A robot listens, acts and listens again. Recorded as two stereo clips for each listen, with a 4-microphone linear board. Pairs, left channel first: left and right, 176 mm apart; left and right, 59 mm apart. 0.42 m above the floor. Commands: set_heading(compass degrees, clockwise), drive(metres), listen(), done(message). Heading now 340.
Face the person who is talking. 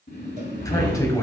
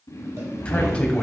set_heading(320)
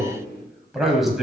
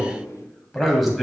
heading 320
done("Found it: a man speaking, straight ahead.")